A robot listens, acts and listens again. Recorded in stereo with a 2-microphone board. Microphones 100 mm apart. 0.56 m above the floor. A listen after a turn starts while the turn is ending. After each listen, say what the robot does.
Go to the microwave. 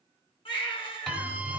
Turn 30° left.
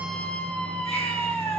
Keep listening.
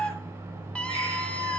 Turn 25° right.
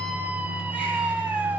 Drive 1.0 m forward.
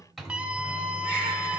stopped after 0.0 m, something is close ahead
Blocked. The microwave is further on, straight ahead.